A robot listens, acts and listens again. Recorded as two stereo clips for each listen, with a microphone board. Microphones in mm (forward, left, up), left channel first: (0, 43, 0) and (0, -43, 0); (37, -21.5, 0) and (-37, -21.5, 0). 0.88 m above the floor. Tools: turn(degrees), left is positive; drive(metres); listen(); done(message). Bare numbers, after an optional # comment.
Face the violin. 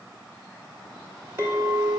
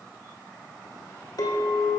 listen()
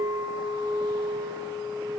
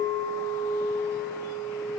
listen()
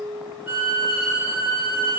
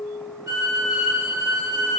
# The violin: 150° right.
turn(-150)
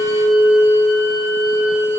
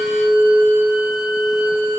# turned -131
# Nothing new. It was at 20° right.
turn(-20)
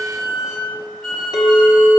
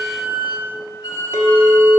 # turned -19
done("Found it: a violin, straight ahead, 2 to 4 m away.")